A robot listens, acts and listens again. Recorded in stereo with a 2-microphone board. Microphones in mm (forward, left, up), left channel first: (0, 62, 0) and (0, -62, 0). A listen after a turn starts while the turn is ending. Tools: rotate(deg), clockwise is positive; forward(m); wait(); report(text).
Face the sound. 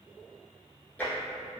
rotate(-30)
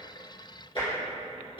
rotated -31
rotate(-135)
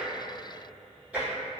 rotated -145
rotate(10)
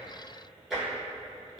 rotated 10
report("Found it: tapping, straight ahead, 1 to 2 m away.")